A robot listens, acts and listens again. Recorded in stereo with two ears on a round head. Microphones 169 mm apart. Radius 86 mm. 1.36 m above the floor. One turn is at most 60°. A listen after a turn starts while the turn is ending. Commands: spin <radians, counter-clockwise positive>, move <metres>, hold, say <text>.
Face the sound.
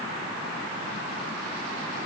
hold
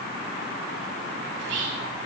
spin -1.05
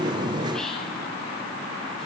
hold
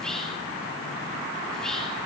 say Found it: whispering, straight ahead.